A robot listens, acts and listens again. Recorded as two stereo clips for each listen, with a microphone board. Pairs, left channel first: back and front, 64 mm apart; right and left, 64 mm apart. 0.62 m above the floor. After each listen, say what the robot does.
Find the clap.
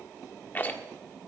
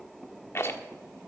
Keep listening.
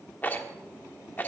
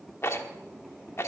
Keep listening.
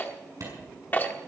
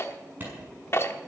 Turn 30° left.
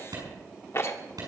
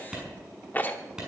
Turn 10° left.
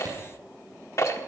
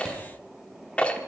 Keep listening.
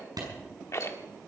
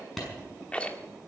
Found it: a clap, straight ahead, over 4 m away.